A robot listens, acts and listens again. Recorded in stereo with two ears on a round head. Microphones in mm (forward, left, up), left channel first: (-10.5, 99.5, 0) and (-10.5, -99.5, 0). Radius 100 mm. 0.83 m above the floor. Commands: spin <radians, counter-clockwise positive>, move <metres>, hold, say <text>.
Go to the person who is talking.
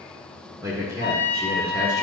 spin -0.52
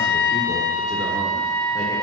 hold
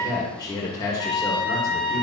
spin 0.35
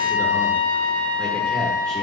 hold
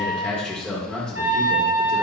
move 1.0
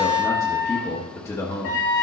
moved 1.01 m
spin 0.26
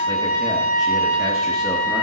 hold
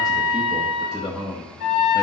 move 1.0
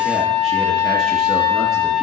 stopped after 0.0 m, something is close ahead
hold
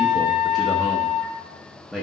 say Arrived at the man speaking, straight ahead.